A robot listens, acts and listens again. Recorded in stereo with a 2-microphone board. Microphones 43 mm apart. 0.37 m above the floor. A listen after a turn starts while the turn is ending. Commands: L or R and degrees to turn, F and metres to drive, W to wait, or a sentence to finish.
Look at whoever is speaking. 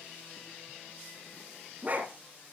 W
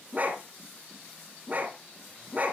W
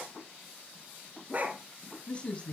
L30
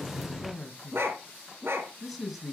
Facing the man speaking, 2 to 4 m away.